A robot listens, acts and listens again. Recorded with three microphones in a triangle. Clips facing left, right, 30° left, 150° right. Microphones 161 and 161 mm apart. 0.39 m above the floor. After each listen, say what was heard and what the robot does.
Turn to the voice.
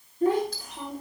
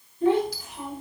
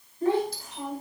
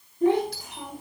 The child speaking: 140° left. Turn 140° left.
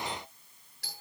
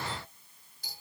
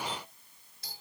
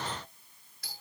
Keep listening.
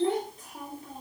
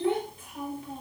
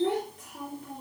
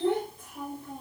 The child speaking is now 40° left. Turn 40° left.
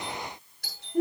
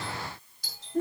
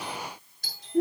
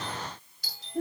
The child speaking is now 15° left. Turn 15° left.
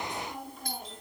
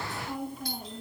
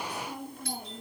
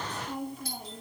Facing the child speaking.